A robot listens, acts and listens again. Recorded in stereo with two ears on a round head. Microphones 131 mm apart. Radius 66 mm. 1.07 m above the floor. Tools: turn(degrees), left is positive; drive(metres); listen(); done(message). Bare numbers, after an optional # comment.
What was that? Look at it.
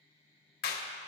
# The clap: about 70° left or 110° left.
turn(70)
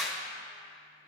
done("Found it: a clap, straight ahead.")